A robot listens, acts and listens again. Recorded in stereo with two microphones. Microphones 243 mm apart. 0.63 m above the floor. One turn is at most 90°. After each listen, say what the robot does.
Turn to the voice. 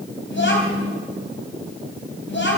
Turn 55° left.
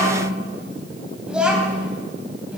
Facing the child speaking.